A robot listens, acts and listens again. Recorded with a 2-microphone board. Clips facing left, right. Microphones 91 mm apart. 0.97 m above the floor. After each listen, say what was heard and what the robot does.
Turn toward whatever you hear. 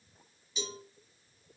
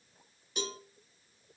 The cowbell: about 55° right or 125° right. Turn 55° right.
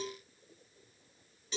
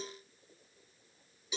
So it is at 10° right. Turn 10° right.
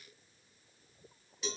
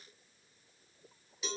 Found it: a cowbell, straight ahead, 1 to 2 m away.